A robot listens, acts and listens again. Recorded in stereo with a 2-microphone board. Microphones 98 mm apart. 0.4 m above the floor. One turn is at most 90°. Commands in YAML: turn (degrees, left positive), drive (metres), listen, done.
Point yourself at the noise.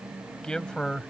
turn: 30
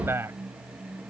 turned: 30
turn: -25
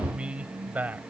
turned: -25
turn: -15
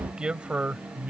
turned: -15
turn: -15
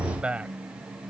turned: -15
turn: -15
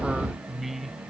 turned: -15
done: "Facing the man speaking."